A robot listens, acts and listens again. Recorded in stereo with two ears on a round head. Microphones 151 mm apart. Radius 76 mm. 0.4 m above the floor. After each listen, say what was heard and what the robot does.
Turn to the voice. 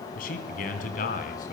The man speaking: about 50° left or 130° left. Turn 50° left.
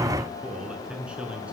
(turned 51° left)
Found it: a man speaking, straight ahead.